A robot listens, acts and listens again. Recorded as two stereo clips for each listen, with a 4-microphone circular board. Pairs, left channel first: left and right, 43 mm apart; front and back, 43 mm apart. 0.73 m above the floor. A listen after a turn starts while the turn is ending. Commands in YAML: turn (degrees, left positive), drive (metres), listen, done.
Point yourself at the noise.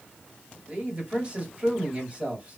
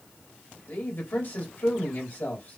turn: -30
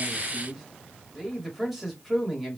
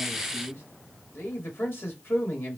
done: "Facing the man speaking."